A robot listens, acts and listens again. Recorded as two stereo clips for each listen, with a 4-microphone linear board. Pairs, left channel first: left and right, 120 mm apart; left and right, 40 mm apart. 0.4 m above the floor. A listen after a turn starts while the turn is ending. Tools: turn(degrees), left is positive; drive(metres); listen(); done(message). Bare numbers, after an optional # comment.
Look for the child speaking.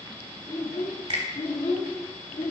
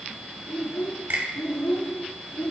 # The child speaking: about 55° left or 125° left.
turn(55)
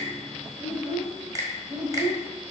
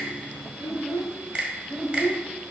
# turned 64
# So it is at 40° right.
turn(-40)
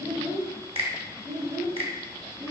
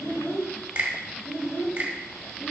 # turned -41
# The child speaking is now 40° right.
turn(-40)
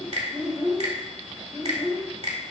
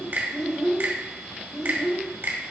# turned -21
# The child speaking is now 20° right.
turn(-20)
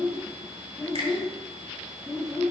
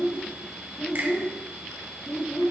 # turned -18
done("Found it: a child speaking, straight ahead.")